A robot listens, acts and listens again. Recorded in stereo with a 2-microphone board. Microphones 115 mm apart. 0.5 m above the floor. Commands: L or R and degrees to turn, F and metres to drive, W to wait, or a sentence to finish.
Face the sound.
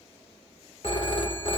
L55
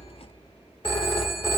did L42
L60
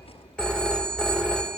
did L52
L10
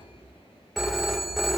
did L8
Found it: a phone ringing, straight ahead.